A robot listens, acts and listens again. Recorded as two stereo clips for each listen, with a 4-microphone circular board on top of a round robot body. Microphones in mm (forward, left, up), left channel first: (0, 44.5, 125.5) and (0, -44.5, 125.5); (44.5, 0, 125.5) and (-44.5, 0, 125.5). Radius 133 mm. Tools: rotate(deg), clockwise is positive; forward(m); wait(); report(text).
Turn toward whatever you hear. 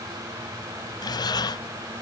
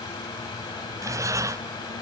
rotate(-130)
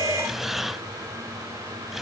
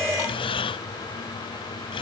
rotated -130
report("Found it: breathing, straight ahead.")